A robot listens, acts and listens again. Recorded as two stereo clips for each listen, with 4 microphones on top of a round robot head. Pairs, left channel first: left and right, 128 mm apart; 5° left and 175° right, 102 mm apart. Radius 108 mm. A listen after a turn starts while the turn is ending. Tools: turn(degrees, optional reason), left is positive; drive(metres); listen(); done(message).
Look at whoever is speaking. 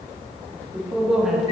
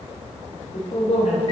done("Facing the man speaking, 2 to 4 m away.")